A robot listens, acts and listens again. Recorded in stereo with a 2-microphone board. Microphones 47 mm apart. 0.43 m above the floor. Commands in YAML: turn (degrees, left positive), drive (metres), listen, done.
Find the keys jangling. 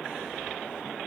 listen: true
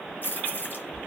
turn: 45
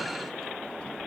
listen: true
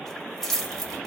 turn: 10
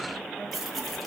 listen: true
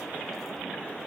listen: true
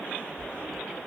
done: "Facing where the keys jangling came from. I can't hear it now."